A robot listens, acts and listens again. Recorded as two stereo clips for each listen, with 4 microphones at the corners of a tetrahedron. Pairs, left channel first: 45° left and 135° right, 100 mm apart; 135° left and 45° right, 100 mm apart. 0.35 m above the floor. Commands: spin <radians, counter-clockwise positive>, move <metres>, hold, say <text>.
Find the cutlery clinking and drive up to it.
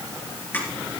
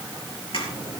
spin 2.01
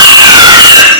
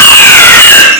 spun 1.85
spin 0.17
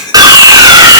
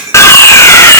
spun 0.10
move 1.0
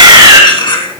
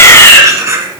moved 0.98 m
spin 0.17
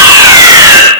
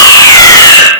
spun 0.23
hold
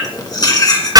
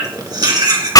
move 1.0
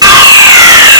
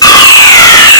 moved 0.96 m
hold
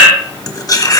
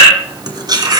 move 1.0
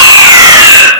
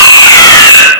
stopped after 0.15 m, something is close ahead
hold
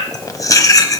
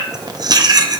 say Arrived at the cutlery clinking, straight ahead.